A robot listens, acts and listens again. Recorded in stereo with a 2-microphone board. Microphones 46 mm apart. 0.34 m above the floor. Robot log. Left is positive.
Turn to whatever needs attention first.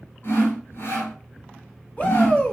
note: The shout: about 35° left or 145° left.
cmd yaw +35
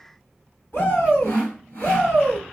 note: So it is at 105° left.
cmd yaw +105
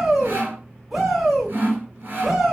end: Found it: a shout, straight ahead, 1 to 2 m away.